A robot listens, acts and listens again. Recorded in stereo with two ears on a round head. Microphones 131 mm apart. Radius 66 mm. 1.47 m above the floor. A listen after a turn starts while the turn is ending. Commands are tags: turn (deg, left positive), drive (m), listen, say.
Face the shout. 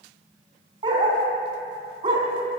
<listen/>
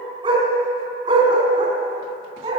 <listen/>
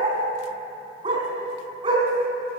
<say>I can't make out a shout to turn to.</say>